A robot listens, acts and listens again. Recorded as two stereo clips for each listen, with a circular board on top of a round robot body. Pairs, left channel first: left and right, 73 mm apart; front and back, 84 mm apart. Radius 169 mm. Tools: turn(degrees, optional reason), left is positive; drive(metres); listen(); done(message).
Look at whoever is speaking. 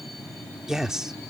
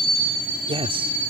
turn(degrees=-175, reason="The man speaking: 175° right.")
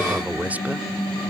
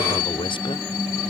listen()
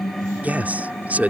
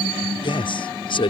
turn(degrees=-20, reason="The man speaking is now 20° right.")
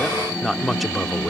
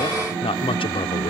done("Facing the man speaking.")